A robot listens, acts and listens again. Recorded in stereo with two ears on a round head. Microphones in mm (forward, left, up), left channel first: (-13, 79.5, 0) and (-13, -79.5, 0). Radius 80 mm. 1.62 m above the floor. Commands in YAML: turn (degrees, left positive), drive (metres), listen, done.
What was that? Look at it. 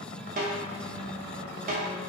turn: -50
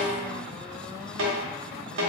turn: -80
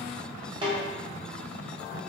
turn: -25
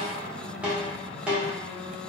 done: "Facing the snare drum."